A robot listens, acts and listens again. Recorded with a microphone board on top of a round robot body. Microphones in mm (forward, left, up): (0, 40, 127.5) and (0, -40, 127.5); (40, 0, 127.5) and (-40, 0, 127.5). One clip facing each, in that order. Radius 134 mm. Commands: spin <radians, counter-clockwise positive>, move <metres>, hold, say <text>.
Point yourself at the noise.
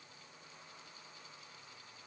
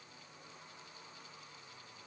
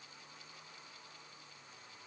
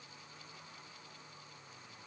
hold
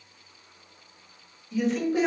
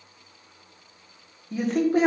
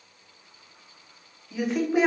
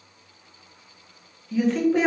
spin -1.40
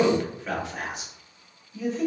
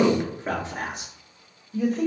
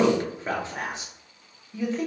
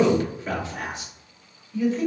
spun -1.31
spin -1.22
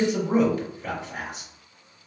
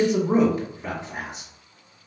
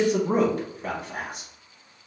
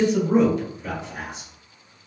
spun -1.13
spin -0.26
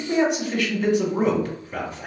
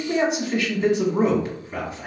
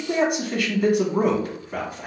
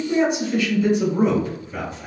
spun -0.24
say Found it: a man speaking, straight ahead, 1 to 2 m away.